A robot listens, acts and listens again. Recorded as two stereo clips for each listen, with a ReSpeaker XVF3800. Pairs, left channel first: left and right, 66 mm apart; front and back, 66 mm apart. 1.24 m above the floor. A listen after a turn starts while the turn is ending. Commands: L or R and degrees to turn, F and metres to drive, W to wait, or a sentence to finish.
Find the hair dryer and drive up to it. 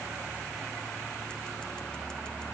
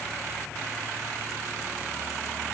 W
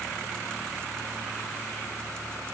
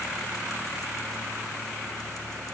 W
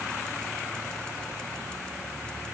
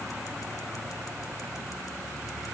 I can't make out a hair dryer.